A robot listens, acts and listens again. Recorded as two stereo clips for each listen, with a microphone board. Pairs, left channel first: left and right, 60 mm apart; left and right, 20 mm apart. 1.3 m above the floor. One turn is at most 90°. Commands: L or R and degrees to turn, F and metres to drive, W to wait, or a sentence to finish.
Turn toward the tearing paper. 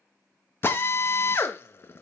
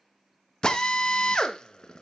W
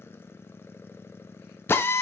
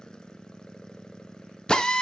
W
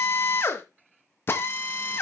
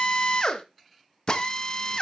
I can't make out tearing paper to turn to.